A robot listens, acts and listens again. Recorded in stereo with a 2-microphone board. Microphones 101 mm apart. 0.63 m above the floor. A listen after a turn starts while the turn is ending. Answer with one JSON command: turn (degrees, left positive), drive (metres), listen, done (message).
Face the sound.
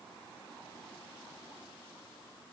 {"listen": true}
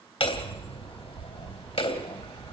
{"turn": 65}
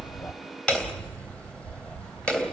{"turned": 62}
{"turn": 10}
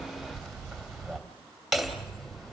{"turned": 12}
{"done": "Found it: hammering, straight ahead."}